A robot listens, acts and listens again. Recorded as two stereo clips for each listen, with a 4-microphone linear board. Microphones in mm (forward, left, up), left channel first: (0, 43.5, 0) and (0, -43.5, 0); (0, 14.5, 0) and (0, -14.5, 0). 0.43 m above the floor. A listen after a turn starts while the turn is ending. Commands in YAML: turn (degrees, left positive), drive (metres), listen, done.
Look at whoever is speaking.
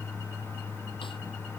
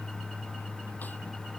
listen: true
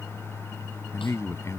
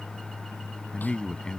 turn: 35
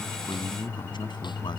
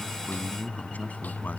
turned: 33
turn: 110
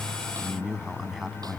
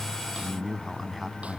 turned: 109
done: "Found it: a man speaking, straight ahead."